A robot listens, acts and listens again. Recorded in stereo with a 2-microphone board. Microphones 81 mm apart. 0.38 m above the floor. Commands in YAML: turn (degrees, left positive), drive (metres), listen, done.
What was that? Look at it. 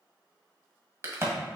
turn: -35
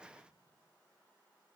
listen: true
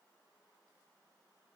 done: "I heard a crack, but can't make it out now. It was about straight ahead or 110° right."